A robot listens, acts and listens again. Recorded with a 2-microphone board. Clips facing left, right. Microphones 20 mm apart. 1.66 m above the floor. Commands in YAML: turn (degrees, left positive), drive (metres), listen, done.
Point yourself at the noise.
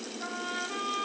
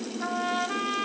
turn: -40
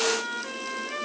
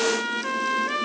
turn: -95
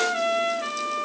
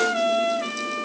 done: "Found it: a trumpet, straight ahead, 1 to 2 m away."